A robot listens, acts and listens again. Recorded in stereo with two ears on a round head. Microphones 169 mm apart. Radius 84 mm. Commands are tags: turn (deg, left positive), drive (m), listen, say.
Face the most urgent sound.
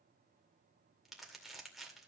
<listen/>
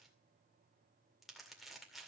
<listen/>
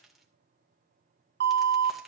<turn deg="-60"/>
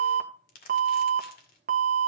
<turn deg="-50"/>
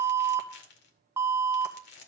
<turn deg="-15"/>
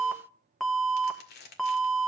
<say>Found it: an alarm, straight ahead, 1 to 2 m away.</say>